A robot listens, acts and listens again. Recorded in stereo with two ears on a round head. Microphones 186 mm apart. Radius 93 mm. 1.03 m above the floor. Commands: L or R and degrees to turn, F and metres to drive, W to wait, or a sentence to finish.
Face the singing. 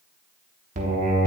R40
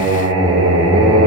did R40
R95
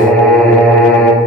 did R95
L10
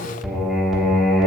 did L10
Facing the singing, under 1 m away.